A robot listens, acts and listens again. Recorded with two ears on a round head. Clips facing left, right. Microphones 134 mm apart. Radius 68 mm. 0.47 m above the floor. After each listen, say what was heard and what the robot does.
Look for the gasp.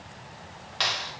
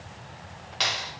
Keep listening.
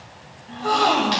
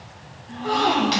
The gasp: about 55° left or 125° left. Turn 55° left.
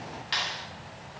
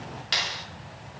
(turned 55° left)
Keep listening.
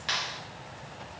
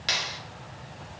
I heard a gasp, but can't make it out now. It was about straight ahead or 70° left.